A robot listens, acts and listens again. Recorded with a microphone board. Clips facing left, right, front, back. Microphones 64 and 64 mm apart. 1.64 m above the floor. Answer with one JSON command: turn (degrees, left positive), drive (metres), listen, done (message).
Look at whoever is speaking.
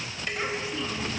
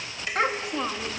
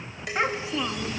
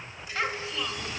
{"turn": -70}
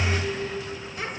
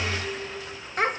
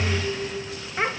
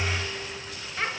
{"turn": -65}
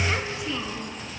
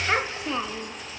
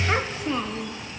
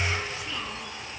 {"turn": -50}
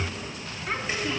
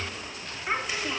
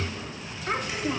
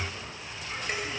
{"turn": -15}
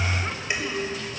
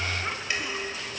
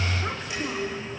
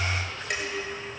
{"listen": true}
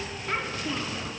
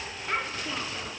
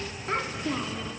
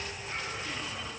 {"done": "Facing the child speaking, 2 to 4 m away."}